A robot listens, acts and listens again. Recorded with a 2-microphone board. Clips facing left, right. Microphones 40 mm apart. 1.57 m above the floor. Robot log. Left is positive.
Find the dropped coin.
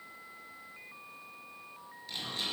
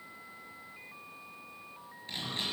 cmd idle
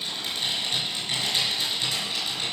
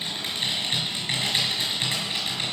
cmd idle
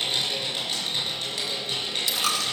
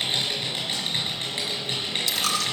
note: The dropped coin: about 15° left or 165° left.
cmd yaw +15
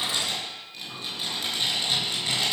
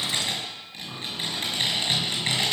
cmd idle
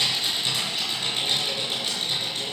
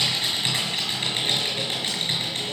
end: I heard a dropped coin, but can't make it out now. It was about straight ahead or 150° left.